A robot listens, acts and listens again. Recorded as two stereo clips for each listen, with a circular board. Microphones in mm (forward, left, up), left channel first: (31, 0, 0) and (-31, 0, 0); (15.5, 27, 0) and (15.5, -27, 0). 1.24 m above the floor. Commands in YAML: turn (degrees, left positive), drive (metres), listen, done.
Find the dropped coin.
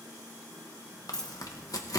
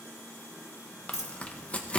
turn: 80
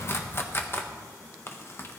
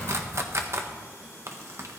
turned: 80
done: "I heard a dropped coin from this way, but can't make it out now."